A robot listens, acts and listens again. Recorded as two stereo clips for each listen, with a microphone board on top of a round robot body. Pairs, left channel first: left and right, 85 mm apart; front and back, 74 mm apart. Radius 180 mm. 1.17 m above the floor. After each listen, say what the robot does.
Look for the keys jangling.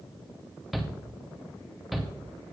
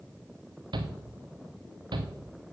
Keep listening.
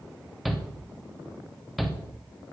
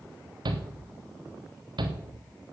Keep listening.
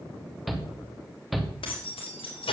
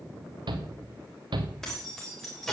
Turn 85° left.
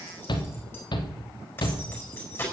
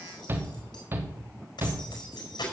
Turn 25° left.
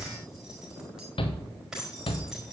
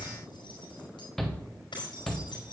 Facing the keys jangling, over 4 m away.